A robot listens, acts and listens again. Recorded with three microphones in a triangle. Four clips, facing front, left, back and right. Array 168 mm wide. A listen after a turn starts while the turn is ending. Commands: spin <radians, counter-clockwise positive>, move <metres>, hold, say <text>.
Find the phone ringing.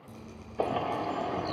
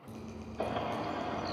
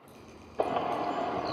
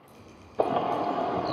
hold
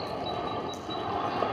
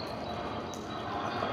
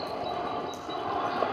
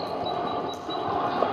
hold
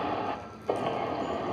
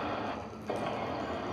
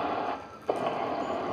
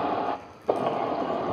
say I can't make out a phone ringing to turn to.